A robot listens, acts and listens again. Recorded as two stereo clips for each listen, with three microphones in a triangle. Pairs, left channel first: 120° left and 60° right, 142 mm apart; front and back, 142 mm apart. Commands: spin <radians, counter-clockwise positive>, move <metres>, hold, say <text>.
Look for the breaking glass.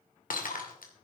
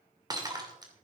spin 2.09
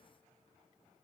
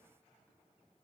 say I heard breaking glass from this way, but can't make it out now.